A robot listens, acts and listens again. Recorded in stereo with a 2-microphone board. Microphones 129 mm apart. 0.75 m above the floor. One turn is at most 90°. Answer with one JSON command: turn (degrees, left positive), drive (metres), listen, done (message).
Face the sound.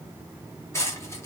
{"turn": 20}
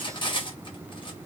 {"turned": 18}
{"turn": 90}
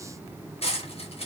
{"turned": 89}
{"turn": 50}
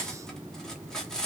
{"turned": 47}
{"done": "Found it: cutlery clinking, straight ahead."}